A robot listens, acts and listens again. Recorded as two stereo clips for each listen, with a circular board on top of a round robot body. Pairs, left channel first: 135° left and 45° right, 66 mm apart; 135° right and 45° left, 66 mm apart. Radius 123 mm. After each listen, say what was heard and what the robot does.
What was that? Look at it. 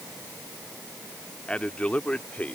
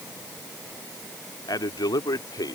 The man speaking: 155° right. Turn 155° right.
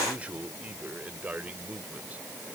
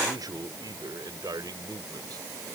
The man speaking is now 25° left. Turn 25° left.
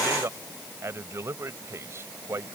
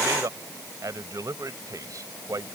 The man speaking is now 10° left. Turn 10° left.
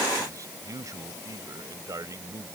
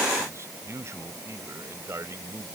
Facing the man speaking.